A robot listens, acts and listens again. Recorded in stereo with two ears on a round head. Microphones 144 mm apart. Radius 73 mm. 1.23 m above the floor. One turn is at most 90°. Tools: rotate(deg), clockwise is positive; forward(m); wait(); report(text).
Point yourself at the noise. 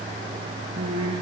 rotate(30)
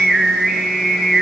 report("Facing the singing.")